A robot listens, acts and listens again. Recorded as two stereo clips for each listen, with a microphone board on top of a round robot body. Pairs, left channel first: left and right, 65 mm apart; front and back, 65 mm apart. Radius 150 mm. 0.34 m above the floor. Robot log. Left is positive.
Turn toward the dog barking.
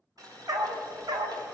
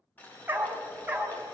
note: The dog barking: 105° right.
cmd yaw -105
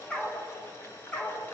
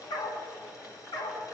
note: The dog barking is now 20° left.
cmd yaw +20
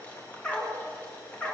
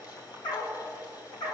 note: The dog barking is now 20° left.
cmd yaw +20
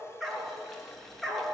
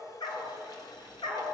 end: Found it: a dog barking, straight ahead, 2 to 4 m away.